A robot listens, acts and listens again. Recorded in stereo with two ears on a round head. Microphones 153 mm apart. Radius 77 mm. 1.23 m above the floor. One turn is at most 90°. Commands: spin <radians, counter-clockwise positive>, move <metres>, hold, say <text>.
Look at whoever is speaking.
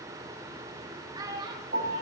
spin -0.44
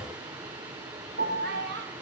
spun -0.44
spin -1.57
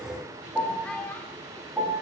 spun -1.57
spin 0.17
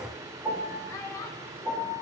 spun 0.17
spin 0.35
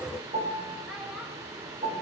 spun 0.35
hold
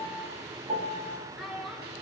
say Facing the child speaking.